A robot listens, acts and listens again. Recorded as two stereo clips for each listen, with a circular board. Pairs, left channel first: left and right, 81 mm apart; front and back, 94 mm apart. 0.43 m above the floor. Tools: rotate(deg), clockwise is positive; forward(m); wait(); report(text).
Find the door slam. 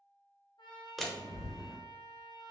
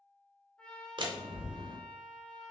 rotate(-175)
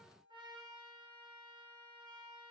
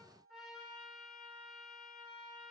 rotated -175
report("Facing where the door slam came from. I can't hear it now.")